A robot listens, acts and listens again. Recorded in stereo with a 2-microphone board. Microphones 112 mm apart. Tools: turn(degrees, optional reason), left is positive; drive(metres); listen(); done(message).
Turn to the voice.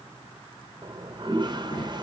turn(degrees=35, reason="The child speaking: about 35° left or 145° left.")
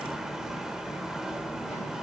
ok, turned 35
listen()
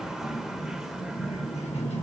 turn(degrees=105, reason="So it is at 105° left.")
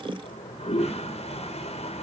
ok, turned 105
listen()
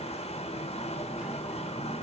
listen()
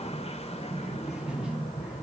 done("Found it: a child speaking, straight ahead, 1 to 2 m away.")